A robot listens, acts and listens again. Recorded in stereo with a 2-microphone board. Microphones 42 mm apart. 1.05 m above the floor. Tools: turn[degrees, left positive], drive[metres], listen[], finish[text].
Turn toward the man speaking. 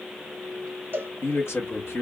Action: turn[90]
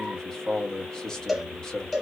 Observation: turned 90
Thought: So it is at 15° left.
Action: turn[15]
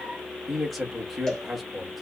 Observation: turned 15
Action: finish[Facing the man speaking, 1 to 2 m away.]